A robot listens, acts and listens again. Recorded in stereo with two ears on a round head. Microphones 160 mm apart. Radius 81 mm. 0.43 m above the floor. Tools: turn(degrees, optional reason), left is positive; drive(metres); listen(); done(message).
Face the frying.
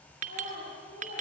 listen()
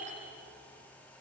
listen()
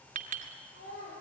done("I can't make out frying, only a child speaking and a clink.")